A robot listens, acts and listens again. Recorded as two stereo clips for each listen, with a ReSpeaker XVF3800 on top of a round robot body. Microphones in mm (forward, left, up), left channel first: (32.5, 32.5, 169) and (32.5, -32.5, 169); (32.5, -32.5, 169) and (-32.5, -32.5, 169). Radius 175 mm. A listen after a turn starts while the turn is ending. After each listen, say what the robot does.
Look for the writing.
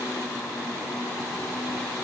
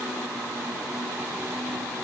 Keep listening.
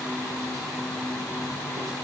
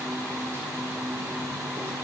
Keep listening.
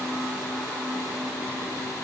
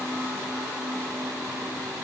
I can't make out writing to turn to.